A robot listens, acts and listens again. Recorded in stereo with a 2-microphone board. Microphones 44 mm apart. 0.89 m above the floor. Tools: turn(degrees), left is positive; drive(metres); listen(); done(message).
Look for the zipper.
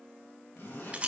turn(degrees=70)
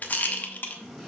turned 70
done("Facing the zipper.")